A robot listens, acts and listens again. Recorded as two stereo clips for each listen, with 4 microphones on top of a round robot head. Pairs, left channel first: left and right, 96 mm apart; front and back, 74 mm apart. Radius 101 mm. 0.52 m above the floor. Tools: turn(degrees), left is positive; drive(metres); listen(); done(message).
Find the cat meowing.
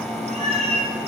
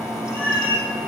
turn(degrees=-70)
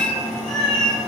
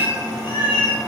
done("Facing the cat meowing, over 4 m away.")